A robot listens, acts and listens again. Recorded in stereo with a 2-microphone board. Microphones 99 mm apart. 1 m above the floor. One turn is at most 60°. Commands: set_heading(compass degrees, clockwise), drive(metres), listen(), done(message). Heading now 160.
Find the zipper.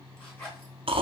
set_heading(140)
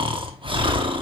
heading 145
listen()
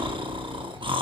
listen()
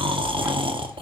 done("I heard a zipper, but can't make it out now. It was about 5° left or 145° left.")